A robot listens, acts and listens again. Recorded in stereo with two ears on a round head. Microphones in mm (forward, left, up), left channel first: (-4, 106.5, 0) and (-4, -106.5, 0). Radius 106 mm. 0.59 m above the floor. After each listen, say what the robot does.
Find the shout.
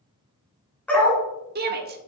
Turn 40° right.
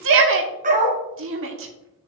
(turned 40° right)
Turn 85° right.
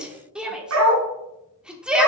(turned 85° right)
Found it: a shout, straight ahead, 1 to 2 m away.